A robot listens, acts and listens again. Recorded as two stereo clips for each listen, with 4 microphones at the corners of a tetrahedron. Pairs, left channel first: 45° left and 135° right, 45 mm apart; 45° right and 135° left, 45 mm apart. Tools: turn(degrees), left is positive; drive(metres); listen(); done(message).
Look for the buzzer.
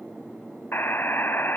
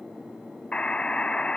turn(degrees=15)
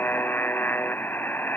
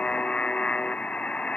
turn(degrees=10)
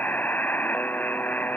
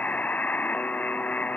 done("Found it: a buzzer, straight ahead.")